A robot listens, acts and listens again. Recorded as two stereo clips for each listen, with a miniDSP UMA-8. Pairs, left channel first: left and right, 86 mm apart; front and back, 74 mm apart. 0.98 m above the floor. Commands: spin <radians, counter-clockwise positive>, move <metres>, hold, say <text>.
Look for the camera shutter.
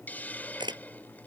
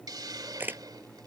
spin -2.01
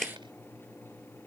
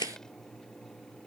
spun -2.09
say Found it: a camera shutter, straight ahead.